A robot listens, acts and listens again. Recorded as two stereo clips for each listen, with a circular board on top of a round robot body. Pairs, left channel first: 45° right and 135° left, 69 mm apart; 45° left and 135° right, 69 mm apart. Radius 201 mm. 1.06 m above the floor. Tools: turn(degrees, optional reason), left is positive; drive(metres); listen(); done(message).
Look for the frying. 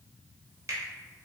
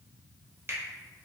listen()
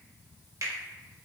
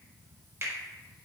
listen()
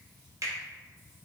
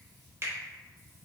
done("I can't make out frying to turn to.")